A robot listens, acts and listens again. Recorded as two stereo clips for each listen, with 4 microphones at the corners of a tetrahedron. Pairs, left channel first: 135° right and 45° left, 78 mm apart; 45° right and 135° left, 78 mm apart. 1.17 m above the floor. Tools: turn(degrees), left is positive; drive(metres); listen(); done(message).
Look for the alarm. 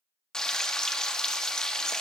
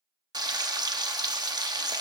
listen()
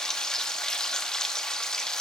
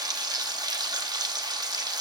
listen()
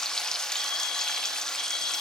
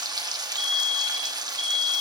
turn(degrees=-120)
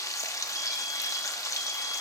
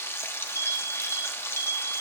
done("Found it: an alarm, straight ahead.")